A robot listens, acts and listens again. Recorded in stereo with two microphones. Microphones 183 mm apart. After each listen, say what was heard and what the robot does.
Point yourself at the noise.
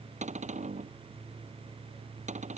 The cupboard door: about 40° right or 140° right. Turn 40° right.
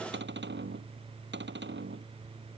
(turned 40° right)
So it is at 100° right. Turn 100° right.
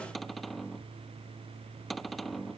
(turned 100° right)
Facing the cupboard door.